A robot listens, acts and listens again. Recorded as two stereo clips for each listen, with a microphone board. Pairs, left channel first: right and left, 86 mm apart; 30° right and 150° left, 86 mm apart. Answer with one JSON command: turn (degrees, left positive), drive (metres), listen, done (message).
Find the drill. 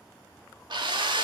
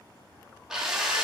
{"turn": 65}
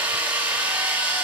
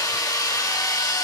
{"turn": 15}
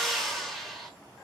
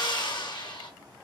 {"done": "Facing the drill, under 1 m away."}